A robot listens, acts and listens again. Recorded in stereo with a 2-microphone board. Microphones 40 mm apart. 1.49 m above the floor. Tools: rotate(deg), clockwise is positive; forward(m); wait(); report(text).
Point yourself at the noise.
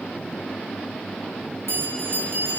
rotate(90)
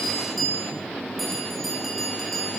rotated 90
report("Found it: a bell, straight ahead.")